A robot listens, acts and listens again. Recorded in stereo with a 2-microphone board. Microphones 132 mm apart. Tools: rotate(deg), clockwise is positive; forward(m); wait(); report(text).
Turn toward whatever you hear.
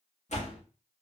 rotate(-65)
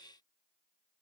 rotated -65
wait()
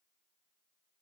report("I heard a door slam, but can't make it out now. It was about straight ahead or 50° left.")